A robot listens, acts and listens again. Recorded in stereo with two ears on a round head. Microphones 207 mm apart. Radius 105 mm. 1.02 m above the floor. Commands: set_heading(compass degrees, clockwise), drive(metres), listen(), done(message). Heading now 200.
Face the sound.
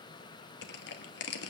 set_heading(155)
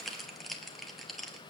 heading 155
done("Facing the crushing.")